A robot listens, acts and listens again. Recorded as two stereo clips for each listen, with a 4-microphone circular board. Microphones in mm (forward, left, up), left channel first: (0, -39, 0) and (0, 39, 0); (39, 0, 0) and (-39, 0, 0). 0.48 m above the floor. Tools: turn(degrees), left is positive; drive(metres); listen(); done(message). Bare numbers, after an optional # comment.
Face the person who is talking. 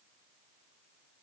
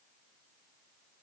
listen()
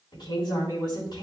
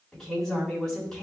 # The woman speaking: 80° right.
turn(-80)
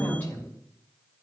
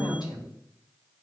# The woman speaking is now 25° right.
turn(-25)
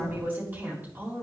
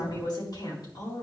# The woman speaking is now 25° left.
turn(25)
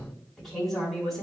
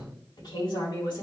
done("Found it: a woman speaking, straight ahead, over 4 m away.")